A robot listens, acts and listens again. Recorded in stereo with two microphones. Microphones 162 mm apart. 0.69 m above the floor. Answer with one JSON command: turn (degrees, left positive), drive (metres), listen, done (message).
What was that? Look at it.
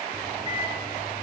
{"turn": -25}
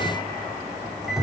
{"done": "Found it: a microwave, straight ahead."}